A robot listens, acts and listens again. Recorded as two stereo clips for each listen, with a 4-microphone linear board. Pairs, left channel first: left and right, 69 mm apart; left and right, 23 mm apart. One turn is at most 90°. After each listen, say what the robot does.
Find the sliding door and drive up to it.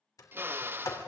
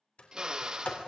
Turn 55° left.
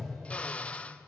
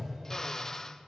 Drive 1.0 m forward.
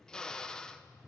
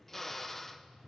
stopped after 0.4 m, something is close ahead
Blocked. The sliding door is further on, straight ahead.